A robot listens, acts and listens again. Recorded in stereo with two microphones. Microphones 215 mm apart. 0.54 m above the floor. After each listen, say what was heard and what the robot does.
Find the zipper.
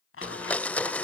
The zipper: about 70° left or 110° left. Turn 70° left.
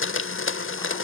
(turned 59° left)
Keep listening.
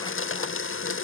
Keep listening.
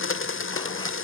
I heard a zipper, but can't make it out now. It was about 10° left or 50° left.